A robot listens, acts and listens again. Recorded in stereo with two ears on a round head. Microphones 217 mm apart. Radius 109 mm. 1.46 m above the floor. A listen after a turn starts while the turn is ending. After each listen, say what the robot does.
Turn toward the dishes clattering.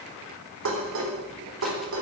Turn 60° right.
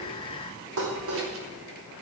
Turn 60° right.
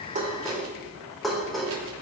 Facing the dishes clattering, over 4 m away.